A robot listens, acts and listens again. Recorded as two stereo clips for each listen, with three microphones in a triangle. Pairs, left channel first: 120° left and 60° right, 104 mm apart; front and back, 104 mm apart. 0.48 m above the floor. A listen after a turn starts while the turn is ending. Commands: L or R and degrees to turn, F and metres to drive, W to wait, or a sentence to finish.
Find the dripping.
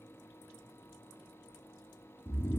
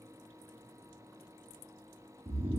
W
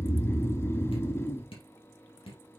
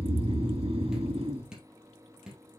L95
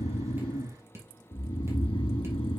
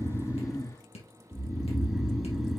Found it: dripping, straight ahead.